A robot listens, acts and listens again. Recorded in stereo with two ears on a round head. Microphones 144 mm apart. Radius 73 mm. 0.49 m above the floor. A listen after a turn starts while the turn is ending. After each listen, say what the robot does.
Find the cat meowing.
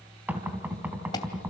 Keep listening.
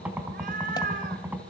Turn 55° right.
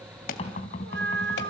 Turn 70° right.
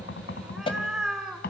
Found it: a cat meowing, straight ahead.